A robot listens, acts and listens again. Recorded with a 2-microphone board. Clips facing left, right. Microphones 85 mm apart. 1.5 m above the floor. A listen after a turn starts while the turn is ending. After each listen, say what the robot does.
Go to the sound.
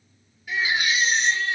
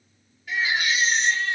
Turn 30° left.
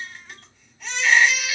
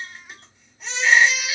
Turn 20° right.
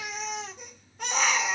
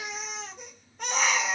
Drive 1.0 m forward.
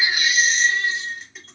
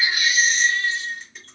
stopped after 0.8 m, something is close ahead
I am next to the baby crying.